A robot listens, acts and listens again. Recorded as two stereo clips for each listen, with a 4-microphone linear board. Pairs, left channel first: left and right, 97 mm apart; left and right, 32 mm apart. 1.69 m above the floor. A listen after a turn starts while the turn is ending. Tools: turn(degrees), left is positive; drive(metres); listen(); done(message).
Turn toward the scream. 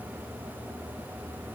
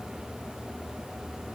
listen()
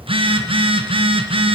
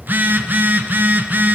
listen()
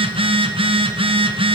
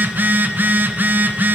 done("I can't make out a scream to turn to.")